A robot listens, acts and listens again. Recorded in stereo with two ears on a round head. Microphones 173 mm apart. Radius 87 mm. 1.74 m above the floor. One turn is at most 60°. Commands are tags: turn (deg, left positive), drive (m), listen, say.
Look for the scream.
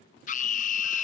<turn deg="40"/>
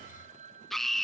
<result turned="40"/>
<say>Found it: a scream, straight ahead.</say>